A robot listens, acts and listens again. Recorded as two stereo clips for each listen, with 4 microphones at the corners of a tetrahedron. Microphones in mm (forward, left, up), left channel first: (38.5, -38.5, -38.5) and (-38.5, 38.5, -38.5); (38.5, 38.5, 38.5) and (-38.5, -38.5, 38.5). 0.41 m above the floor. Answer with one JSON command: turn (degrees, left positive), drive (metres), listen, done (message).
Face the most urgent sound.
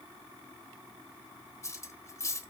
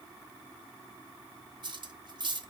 {"listen": true}
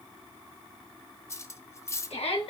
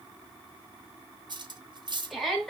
{"turn": -45}
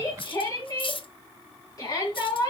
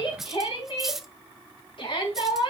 {"turn": 10}
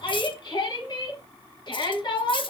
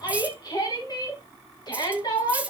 {"done": "Found it: a shout, straight ahead, 2 to 4 m away."}